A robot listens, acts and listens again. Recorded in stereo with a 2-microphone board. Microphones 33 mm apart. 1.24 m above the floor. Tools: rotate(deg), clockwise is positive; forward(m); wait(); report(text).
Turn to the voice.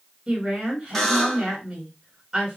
rotate(20)
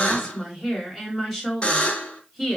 report("Found it: a woman speaking, straight ahead.")